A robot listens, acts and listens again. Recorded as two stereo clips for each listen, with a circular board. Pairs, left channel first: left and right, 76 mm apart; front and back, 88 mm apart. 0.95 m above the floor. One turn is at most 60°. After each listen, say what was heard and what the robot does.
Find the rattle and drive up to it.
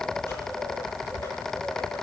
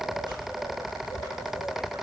Keep listening.
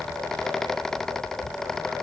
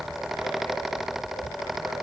Keep listening.
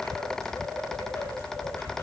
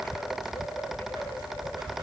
I can't make out a rattle to turn to.